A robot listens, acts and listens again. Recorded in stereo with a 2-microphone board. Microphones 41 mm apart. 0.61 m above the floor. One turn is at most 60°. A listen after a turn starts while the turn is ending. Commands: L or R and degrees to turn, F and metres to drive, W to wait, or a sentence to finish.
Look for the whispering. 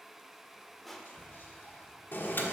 L50
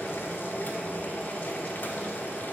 W
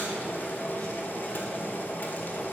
W
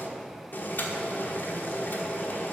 I heard whispering, but can't make it out now. It was about straight ahead or 80° left.